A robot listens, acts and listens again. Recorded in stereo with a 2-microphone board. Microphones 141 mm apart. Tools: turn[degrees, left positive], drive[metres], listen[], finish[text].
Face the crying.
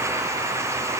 Action: listen[]
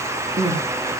Thought: The crying: about 55° right or 125° right.
Action: turn[-55]
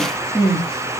Action: finish[Found it: crying, straight ahead, over 4 m away.]